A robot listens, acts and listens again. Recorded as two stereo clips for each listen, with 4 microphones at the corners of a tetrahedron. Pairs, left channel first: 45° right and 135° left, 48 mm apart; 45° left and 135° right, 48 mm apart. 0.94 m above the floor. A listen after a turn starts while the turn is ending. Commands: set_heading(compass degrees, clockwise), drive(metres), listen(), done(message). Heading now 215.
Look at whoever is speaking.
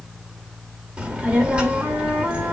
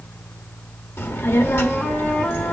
set_heading(150)
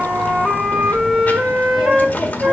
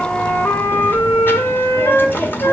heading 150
done("Facing the child speaking.")